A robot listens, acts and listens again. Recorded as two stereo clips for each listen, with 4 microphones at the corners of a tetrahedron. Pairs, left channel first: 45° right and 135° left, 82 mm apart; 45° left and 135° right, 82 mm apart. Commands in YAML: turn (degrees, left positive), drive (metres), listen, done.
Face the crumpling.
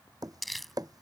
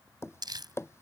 turn: -135
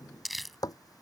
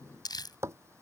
turn: 45
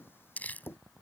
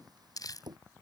turn: 20
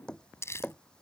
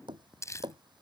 done: "Facing the crumpling."